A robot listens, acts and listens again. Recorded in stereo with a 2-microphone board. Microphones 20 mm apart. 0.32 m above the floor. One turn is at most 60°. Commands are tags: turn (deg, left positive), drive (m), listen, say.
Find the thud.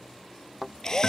<turn deg="30"/>
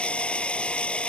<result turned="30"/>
<listen/>
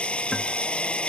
<say>I heard a thud, but can't make it out now. It was about 30° right or 150° left.</say>